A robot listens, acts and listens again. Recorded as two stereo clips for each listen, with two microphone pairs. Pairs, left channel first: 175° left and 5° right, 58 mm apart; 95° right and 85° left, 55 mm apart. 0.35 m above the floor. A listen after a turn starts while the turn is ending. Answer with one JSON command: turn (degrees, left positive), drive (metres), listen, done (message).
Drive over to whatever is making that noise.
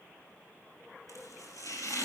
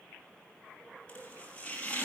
{"turn": -165}
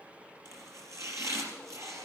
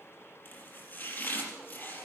{"turn": -40}
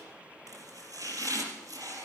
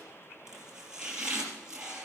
{"drive": 1.0}
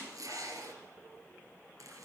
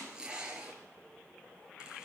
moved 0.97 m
{"turn": 10}
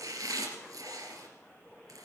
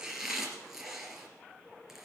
{"drive": 1.0}
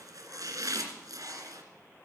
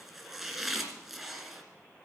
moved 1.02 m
{"drive": 1.0}
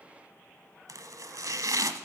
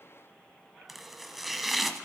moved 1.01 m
{"drive": 1.0}
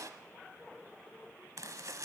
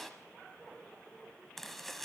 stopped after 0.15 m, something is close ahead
{"turn": -10}
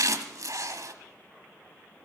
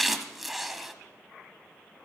{"done": "Arrived at the chopping, straight ahead."}